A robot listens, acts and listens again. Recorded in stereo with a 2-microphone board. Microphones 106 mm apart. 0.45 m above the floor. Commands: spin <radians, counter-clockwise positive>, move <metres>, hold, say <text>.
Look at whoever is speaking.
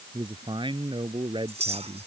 spin -0.87
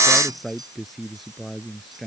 say Found it: a man speaking, straight ahead.